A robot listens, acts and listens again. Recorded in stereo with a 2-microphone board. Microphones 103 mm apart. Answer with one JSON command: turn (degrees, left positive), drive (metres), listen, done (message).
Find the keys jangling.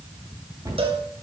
{"listen": true}
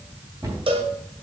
{"listen": true}
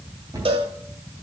{"done": "I can't make out keys jangling to turn to."}